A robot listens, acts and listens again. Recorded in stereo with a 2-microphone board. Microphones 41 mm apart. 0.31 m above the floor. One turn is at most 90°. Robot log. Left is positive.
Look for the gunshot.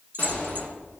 note: The gunshot: about 40° left or 140° left.
cmd yaw +40
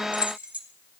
cmd idle
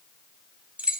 end: I heard a gunshot, but can't make it out now. It was about straight ahead or 100° left.